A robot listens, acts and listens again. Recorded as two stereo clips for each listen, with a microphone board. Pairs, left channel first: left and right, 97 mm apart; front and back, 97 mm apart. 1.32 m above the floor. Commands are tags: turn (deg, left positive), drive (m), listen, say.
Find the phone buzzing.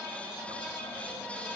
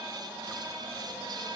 <listen/>
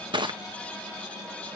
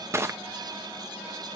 <listen/>
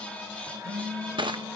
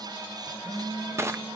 <turn deg="-30"/>
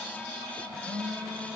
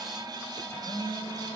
<say>Found it: a phone buzzing, straight ahead, over 4 m away.</say>